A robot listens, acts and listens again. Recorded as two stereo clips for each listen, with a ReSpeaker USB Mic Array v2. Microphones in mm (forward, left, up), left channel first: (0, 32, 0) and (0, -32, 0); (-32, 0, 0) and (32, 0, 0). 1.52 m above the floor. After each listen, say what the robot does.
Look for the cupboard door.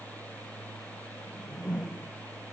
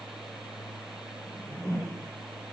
Keep listening.
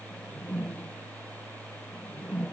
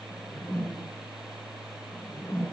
Keep listening.
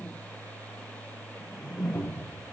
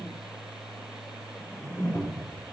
Turn 140° left.
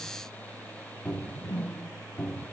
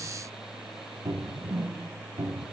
Turn 15° left.
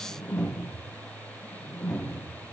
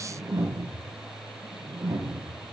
Facing the cupboard door.